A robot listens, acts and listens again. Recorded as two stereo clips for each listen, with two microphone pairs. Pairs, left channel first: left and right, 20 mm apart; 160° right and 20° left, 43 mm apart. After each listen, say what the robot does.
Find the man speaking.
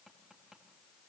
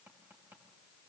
Keep listening.
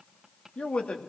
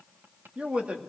Turn 80° left.
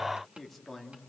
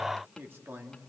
Facing the man speaking.